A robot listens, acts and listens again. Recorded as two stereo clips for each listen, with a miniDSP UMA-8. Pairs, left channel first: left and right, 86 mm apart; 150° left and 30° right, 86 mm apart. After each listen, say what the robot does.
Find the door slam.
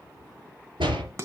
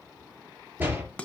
Turn 95° right.
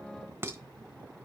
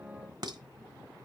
I heard a door slam from this way, but can't make it out now.